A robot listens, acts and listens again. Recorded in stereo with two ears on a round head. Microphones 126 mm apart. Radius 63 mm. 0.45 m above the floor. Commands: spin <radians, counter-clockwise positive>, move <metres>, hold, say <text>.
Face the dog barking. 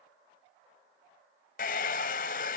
hold
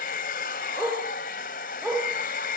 spin 0.52
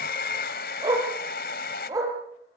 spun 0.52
spin -0.44
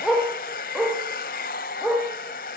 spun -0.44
say Facing the dog barking.